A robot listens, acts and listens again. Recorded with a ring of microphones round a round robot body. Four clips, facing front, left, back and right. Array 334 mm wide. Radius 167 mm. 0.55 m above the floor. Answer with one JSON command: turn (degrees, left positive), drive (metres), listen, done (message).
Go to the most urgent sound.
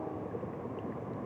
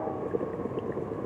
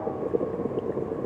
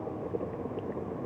{"listen": true}
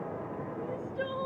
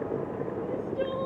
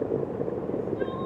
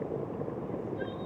{"turn": 60}
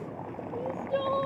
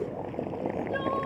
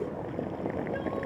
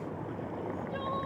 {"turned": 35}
{"turn": 25}
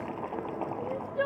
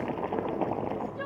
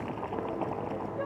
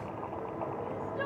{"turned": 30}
{"drive": 1.0}
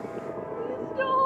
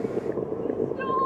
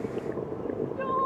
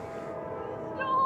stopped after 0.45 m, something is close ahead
{"done": "Blocked. The crying is further on, straight ahead."}